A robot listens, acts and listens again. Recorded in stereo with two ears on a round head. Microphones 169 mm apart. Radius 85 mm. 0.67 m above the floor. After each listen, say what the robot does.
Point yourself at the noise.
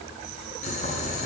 Turn 35° left.
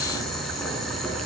Found it: boiling, straight ahead, over 4 m away.